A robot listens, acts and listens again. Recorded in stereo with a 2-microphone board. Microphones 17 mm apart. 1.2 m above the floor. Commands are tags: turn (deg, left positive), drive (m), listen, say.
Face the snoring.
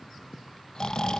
<turn deg="55"/>
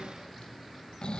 <turn deg="70"/>
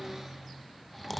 <say>Facing the snoring, under 1 m away.</say>